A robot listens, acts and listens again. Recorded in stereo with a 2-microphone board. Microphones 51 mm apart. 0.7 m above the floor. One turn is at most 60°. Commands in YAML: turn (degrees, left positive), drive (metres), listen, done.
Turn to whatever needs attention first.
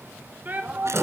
turn: -40
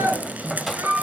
turn: -60
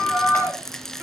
turn: -40
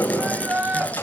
turn: -35
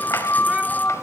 listen: true
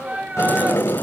turn: -25
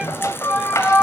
turn: -10
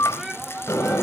done: "Facing the shout."